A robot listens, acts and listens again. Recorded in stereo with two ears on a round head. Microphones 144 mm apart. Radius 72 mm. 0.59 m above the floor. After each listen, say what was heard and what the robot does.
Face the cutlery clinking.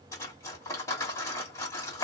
The cutlery clinking: about 20° left or 160° left. Turn 20° left.
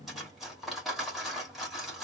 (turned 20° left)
Facing the cutlery clinking, 1 to 2 m away.